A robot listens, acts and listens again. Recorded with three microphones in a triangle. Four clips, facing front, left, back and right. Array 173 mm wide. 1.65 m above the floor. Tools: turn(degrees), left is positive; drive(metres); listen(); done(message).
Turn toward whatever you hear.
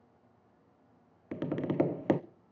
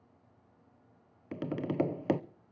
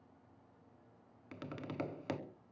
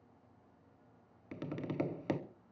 turn(degrees=35)
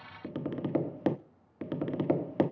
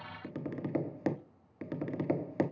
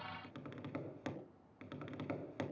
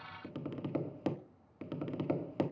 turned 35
turn(degrees=15)
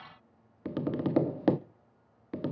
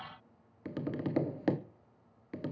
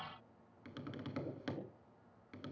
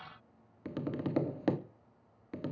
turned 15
done("Facing the tapping, under 1 m away.")